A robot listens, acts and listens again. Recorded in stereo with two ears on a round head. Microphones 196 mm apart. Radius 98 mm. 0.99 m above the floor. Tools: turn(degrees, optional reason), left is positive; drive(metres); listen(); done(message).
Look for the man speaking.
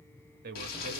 turn(degrees=-45, reason="The man speaking: about 45° right or 135° right.")
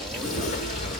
listen()
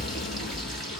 listen()
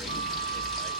done("I heard a man speaking, but can't make it out now. It was about straight ahead or 90° right.")